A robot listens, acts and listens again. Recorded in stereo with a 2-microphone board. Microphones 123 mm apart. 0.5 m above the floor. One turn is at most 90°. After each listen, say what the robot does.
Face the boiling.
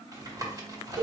Keep listening.
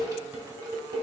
Keep listening.
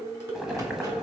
Turn 30° right.
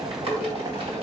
Turn 90° right.
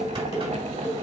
Turn 75° right.
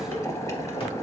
Turn 25° left.
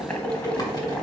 Turn 10° left.
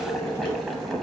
Facing the boiling, under 1 m away.